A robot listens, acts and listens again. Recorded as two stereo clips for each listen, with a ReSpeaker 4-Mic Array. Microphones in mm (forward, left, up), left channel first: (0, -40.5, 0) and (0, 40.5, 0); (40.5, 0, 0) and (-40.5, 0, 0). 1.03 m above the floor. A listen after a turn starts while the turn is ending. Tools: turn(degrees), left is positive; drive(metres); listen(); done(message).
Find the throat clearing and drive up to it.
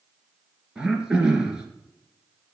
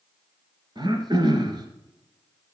turn(degrees=170)
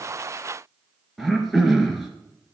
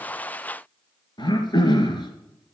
drive(metres=1.0)
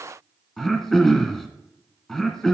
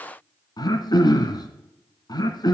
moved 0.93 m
drive(metres=1.0)
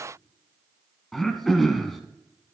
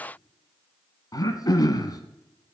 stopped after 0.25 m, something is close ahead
done("Arrived at the throat clearing, straight ahead.")